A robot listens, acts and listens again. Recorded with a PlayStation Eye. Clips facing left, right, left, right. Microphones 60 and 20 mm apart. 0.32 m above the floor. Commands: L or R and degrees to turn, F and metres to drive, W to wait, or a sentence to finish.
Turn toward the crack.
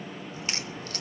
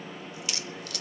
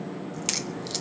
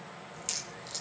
L35
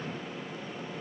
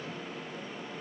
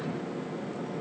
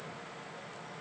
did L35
W
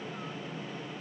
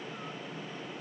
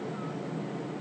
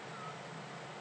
I heard a crack, but can't make it out now. It was about straight ahead or 110° left.